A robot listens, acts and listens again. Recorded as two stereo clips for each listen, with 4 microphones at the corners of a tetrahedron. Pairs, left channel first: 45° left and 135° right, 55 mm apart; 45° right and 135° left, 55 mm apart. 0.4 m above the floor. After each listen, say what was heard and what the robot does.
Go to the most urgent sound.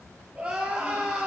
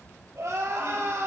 The crying: 155° left. Turn 155° left.
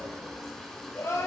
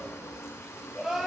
The crying is now 60° left. Turn 60° left.
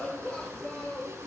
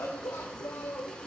The crying is now 15° right. Turn 15° right.
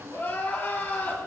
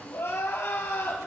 Drive 1.0 m forward.
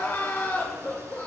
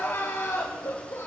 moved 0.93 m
Drive 1.0 m forward.
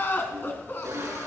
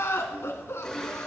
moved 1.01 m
Drive 1.0 m forward.
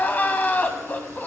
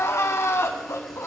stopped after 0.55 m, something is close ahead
The crying is now 10° right. Turn 10° right.
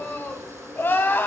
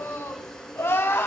I am next to the crying.